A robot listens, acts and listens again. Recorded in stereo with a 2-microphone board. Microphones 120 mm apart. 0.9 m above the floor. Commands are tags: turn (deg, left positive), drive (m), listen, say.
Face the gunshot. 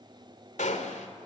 <turn deg="90"/>
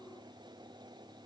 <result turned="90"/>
<say>Facing where the gunshot came from. I can't hear it now.</say>